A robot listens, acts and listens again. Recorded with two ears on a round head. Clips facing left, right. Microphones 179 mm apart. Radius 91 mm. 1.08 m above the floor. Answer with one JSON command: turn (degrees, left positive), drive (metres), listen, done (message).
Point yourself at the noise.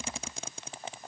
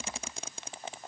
{"listen": true}
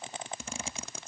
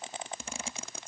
{"listen": true}
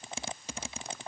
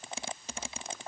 {"done": "I can't make out anything."}